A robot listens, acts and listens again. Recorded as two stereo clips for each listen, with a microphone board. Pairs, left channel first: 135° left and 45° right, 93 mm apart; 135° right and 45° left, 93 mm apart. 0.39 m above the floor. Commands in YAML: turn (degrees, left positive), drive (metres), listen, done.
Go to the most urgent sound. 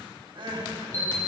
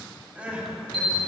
turn: -30
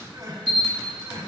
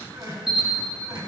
drive: 1.0
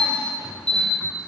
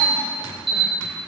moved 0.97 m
listen: true
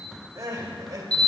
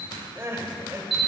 turn: -10
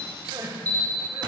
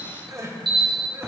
drive: 1.0
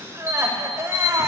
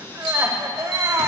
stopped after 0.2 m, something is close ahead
done: "Arrived at the crying, straight ahead."